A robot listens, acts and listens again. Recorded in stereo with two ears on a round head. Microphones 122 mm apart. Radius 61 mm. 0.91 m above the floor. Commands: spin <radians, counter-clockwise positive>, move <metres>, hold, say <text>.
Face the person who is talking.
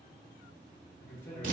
spin 0.35
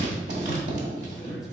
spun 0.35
hold
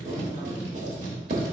hold
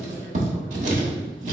say I heard a man speaking, but can't make it out now. It was about straight ahead or 140° left.